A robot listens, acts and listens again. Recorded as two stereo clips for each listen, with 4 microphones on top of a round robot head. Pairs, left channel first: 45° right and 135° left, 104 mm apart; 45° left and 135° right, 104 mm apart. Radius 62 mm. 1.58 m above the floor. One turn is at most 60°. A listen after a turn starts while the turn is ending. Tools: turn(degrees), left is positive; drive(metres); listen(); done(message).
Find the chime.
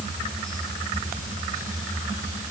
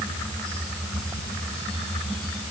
listen()
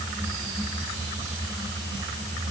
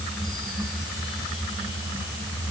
listen()
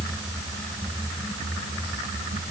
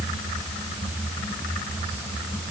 done("I can't make out a chime to turn to.")